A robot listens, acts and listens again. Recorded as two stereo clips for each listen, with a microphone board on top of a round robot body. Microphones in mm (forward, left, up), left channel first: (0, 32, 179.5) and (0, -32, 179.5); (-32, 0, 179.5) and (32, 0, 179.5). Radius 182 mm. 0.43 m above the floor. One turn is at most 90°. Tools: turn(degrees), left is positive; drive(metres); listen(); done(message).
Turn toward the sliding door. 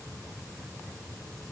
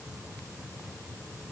listen()
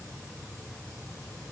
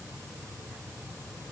listen()
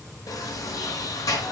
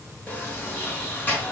turn(degrees=90)
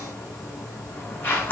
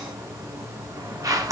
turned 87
turn(degrees=30)
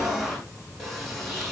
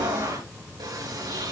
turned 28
done("Found it: a sliding door, straight ahead.")